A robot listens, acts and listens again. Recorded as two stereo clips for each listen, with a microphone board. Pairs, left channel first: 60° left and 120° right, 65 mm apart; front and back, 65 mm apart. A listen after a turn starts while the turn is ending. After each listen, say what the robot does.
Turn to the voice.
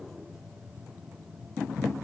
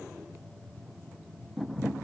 Keep listening.
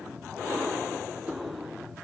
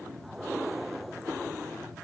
Keep listening.
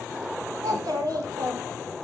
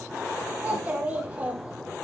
Turn 110° right.
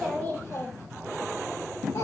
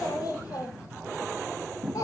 Turn 25° left.
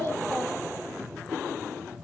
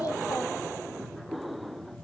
Keep listening.
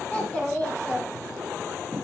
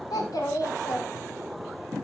Turn 10° right.
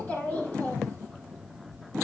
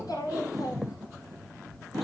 Facing the child speaking.